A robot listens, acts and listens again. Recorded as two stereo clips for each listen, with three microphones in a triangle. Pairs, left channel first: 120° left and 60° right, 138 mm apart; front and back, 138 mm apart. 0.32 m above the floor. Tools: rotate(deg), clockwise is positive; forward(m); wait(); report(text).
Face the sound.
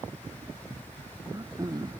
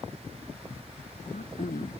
report("Found it: throat clearing, straight ahead.")